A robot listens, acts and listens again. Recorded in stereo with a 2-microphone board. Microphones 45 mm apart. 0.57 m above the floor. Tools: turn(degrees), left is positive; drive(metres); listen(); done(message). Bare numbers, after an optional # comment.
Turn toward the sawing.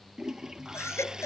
# The sawing: about 20° right or 160° right.
turn(-20)
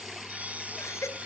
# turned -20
# So it is at 145° right.
turn(-145)
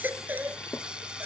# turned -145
# The sawing is now 20° right.
turn(-20)
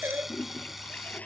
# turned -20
done("Found it: sawing, straight ahead.")